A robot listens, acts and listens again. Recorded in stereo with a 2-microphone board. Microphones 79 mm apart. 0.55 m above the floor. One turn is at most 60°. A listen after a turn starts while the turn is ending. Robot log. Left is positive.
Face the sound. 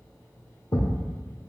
note: The thud: about 40° left or 140° left.
cmd yaw +40
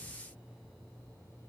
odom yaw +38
cmd idle
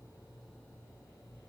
end: I heard a thud, but can't make it out now. It was about 5° left or 100° left.